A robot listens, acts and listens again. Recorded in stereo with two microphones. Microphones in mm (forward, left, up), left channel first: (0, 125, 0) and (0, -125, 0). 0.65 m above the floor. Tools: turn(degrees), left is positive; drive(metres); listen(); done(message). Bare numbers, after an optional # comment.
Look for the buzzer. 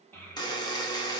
# The buzzer: about 15° left or 165° left.
turn(15)
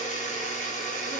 # So it is at 150° left.
turn(150)
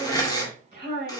# The buzzer is now 15° left.
turn(15)
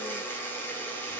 # The buzzer is now 10° left.
turn(10)
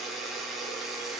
done("Facing the buzzer.")